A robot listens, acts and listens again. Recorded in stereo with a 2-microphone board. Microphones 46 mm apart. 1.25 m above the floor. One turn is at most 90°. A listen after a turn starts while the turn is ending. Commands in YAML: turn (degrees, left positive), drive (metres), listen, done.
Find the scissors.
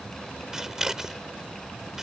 turn: -30
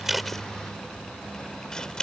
turn: 20
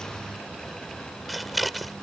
done: "Found it: scissors, straight ahead."